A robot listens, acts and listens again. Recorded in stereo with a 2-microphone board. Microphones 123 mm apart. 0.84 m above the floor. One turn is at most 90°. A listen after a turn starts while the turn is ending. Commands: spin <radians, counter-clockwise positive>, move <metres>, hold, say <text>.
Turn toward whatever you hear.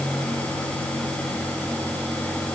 hold
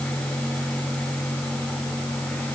hold
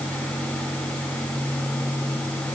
say I can't make out anything.